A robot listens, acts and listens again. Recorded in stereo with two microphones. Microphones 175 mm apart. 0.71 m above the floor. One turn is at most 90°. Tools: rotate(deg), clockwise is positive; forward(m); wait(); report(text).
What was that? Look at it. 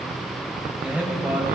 rotate(30)
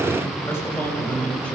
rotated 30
rotate(-10)
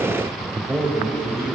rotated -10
rotate(15)
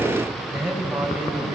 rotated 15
rotate(10)
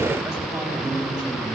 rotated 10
report("Facing the man speaking, over 4 m away.")